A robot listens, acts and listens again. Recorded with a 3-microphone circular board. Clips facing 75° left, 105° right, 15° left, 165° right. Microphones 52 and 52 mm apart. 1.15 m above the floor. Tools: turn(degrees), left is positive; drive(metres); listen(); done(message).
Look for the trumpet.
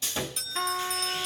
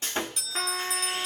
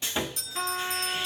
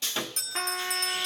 turn(degrees=-135)
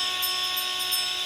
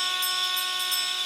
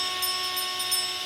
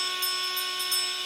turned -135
listen()
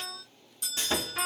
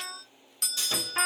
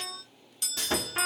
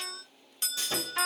listen()
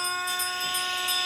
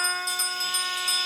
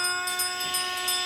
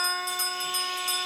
turn(degrees=-50)
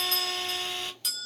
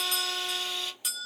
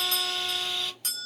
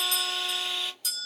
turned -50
listen()
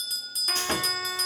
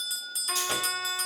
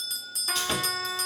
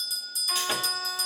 listen()
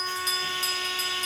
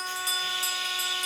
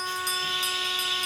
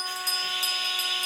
turn(degrees=35)
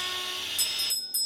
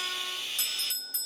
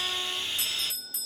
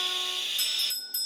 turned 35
listen()
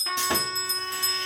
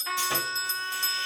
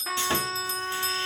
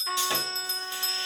done("Facing the trumpet.")